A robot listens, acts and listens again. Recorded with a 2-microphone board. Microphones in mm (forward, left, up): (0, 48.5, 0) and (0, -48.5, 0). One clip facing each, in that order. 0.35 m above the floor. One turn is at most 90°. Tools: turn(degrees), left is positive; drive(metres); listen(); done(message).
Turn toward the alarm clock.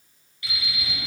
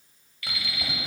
turn(degrees=25)
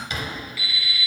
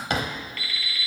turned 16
turn(degrees=10)
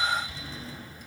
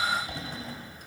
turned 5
listen()
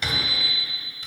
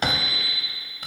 done("Found it: an alarm clock, straight ahead, 2 to 4 m away.")